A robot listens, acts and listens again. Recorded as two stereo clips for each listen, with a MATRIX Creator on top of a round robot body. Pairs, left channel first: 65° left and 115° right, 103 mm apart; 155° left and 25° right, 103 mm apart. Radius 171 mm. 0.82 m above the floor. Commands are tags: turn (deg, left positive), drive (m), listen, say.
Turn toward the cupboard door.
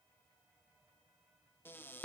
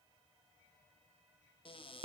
<turn deg="135"/>
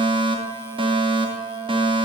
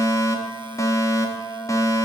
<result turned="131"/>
<listen/>
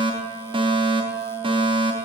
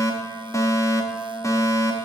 <listen/>
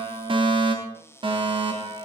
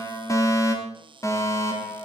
<say>Found it: a cupboard door, straight ahead.</say>